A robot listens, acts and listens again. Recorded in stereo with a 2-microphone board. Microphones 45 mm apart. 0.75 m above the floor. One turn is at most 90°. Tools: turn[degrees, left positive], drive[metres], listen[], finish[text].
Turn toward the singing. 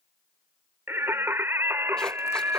Thought: The singing: about 65° right or 115° right.
Action: turn[-65]
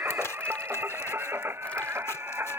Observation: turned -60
Thought: So it is at 60° right.
Action: turn[-60]
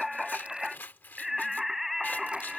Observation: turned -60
Action: finish[Facing the singing.]